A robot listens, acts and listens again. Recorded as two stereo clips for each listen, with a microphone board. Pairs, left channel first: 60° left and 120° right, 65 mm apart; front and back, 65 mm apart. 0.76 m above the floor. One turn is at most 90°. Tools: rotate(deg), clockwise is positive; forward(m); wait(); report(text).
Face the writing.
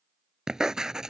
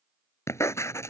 rotate(40)
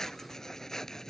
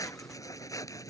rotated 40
rotate(20)
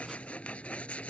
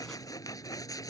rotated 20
rotate(10)
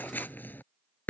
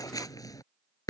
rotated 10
report("Facing the writing.")